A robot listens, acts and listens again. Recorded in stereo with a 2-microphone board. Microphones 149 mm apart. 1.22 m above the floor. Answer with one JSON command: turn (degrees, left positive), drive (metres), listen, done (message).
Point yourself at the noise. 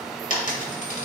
{"turn": 60}
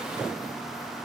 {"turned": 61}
{"listen": true}
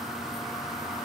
{"done": "I heard a dropped coin, but can't make it out now. It was about straight ahead or 60° left."}